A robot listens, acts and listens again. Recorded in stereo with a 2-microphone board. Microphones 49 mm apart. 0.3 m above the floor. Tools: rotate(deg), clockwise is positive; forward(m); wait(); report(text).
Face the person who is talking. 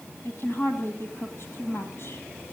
rotate(-55)
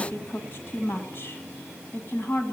rotate(-55)
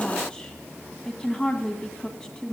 rotate(-20)
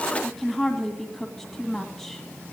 report("Facing the woman speaking.")